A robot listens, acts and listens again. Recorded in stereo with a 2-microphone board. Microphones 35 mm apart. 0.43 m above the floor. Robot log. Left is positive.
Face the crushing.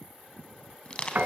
note: The crushing: about 25° left or 155° left.
cmd yaw +25
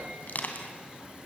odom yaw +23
note: So it is at 130° left.
cmd yaw +130
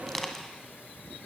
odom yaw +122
end: Found it: crushing, straight ahead.